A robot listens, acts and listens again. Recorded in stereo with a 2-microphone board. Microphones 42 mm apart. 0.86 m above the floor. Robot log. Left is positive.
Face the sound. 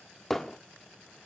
cmd yaw +30
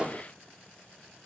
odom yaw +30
note: So it is at 25° right.
cmd yaw -25
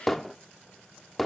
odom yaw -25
end: Facing the hammering.